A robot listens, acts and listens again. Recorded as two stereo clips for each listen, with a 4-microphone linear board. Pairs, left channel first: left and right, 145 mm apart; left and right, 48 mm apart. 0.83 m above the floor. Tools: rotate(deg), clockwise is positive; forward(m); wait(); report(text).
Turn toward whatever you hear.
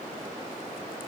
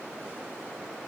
wait()
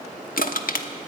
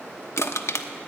rotate(-75)
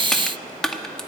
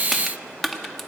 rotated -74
report("Found it: crushing, straight ahead, under 1 m away.")